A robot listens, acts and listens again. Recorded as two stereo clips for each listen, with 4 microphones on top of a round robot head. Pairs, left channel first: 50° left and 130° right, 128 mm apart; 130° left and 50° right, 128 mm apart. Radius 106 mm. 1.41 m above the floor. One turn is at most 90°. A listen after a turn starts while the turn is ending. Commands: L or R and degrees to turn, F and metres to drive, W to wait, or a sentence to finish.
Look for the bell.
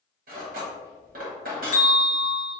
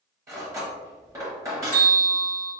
L55
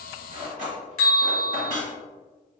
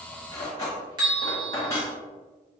Found it: a bell, straight ahead, 1 to 2 m away.